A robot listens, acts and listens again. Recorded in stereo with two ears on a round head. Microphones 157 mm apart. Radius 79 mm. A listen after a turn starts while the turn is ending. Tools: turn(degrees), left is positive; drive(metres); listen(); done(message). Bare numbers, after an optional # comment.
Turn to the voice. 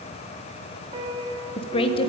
# The woman speaking: about 30° left or 150° left.
turn(30)
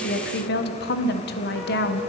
# So it is at 115° left.
turn(115)
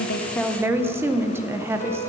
# The woman speaking is now 15° right.
turn(-15)
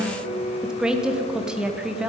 done("Facing the woman speaking.")